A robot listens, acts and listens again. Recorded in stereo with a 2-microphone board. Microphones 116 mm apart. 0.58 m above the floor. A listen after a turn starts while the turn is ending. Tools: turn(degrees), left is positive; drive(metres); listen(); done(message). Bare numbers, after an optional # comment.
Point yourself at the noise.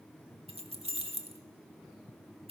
# The keys jangling: about 60° right or 120° right.
turn(-60)
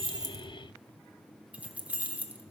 # So it is at 15° right.
turn(-15)
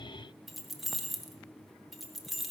done("Found it: keys jangling, straight ahead.")